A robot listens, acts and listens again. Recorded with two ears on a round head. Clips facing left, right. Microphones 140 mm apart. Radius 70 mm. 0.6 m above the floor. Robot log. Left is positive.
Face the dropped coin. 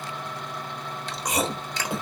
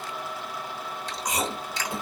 cmd idle
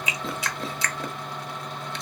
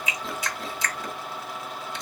cmd idle
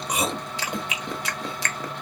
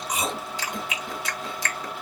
end: I can't make out a dropped coin, only chewing.